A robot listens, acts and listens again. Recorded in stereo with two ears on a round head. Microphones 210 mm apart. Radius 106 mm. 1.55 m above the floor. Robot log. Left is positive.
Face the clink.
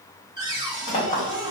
note: The clink: about 15° left or 165° left.
cmd yaw +15
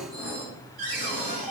end: Found it: a clink, straight ahead.